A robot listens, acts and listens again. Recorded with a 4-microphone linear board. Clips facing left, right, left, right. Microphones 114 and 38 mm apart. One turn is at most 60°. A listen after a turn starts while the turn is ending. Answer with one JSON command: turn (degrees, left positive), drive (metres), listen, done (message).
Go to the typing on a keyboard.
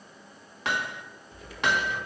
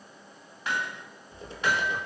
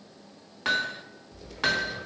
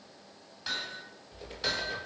{"turn": -25}
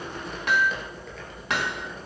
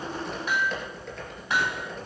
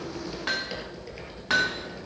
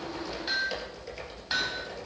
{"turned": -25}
{"drive": 1.0}
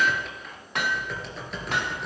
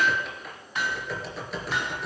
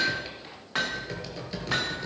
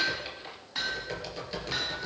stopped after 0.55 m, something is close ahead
{"done": "Blocked. The typing on a keyboard is further on, straight ahead."}